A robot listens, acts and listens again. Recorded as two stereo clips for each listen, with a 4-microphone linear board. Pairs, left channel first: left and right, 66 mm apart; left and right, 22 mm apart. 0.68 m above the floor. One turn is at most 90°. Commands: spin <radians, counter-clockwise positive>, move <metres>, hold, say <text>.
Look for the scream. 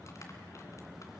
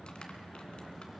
hold
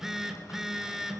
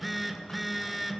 hold
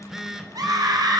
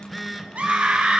spin -1.57
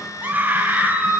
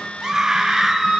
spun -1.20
spin -0.44
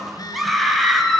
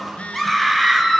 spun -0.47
say Facing the scream, over 4 m away.